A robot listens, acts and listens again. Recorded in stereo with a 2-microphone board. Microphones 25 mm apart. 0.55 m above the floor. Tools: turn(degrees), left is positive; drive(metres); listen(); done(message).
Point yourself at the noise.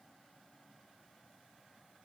listen()
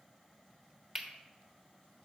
turn(degrees=-20)
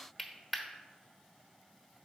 done("Facing the cutlery clinking.")